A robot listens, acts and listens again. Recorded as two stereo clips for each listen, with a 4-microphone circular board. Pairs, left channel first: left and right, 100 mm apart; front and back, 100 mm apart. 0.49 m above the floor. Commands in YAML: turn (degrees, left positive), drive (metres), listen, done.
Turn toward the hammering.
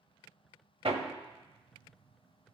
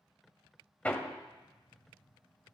turn: -75
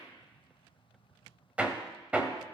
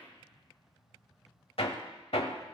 turn: -15
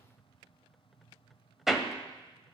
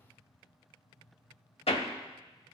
done: "Facing the hammering, 1 to 2 m away."